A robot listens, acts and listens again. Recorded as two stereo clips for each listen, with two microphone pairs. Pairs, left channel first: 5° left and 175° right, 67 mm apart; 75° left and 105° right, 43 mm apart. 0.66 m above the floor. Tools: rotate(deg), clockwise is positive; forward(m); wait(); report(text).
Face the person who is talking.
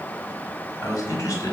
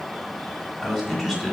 rotate(15)
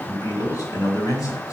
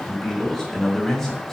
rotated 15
report("Facing the man speaking.")